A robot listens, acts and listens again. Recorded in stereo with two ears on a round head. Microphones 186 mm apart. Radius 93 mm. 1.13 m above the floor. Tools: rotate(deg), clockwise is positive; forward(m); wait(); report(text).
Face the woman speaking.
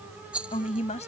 rotate(-35)
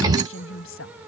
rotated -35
rotate(-110)
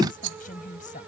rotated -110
rotate(-40)
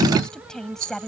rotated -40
report("Found it: a woman speaking, straight ahead.")